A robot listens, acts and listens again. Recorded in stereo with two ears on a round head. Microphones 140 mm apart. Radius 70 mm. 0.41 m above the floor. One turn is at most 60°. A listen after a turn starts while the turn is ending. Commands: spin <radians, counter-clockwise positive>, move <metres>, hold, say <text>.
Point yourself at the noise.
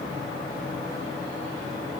hold
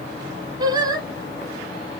spin -0.44
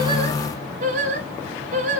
spin -1.05
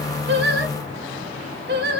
spin -1.05
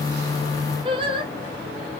spin -0.61
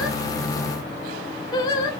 spin 0.44
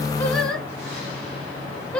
say Facing the singing.